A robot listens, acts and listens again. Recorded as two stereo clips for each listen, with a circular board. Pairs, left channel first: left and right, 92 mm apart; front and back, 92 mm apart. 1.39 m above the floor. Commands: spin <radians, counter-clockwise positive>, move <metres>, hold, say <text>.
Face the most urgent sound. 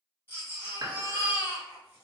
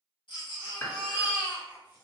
spin 0.44
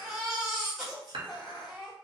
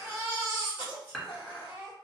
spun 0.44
say Facing the baby crying.